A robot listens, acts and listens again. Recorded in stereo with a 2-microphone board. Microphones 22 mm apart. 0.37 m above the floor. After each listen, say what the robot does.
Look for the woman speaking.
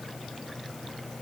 Keep listening.
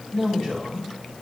Turn 20° left.
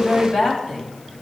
Turn 25° left.
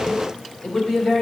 Turn 35° left.
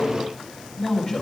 Turn 135° left.
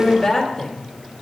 Facing the woman speaking.